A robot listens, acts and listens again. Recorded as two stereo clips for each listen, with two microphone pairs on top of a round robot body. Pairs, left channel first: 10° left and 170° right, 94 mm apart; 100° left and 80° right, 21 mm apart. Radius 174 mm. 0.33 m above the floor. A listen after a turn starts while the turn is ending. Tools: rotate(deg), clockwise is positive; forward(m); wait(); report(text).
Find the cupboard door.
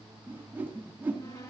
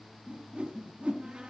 rotate(40)
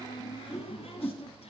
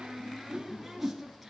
report("Facing the cupboard door, over 4 m away.")